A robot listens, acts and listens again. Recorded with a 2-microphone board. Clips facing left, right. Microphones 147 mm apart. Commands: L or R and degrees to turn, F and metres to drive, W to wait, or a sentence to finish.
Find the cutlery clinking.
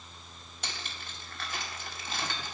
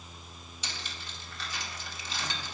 L55
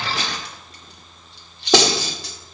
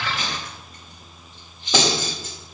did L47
L80
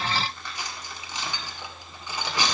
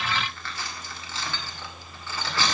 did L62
L15
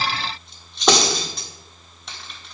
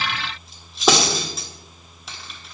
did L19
Facing the cutlery clinking.